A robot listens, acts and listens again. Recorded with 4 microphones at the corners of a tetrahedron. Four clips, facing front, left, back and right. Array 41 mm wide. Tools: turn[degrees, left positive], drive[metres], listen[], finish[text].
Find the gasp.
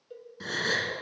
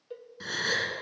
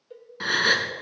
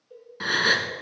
Thought: The gasp: 140° right.
Action: turn[-140]
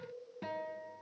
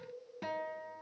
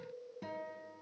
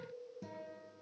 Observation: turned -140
Action: finish[Facing where the gasp came from. I can't hear it now.]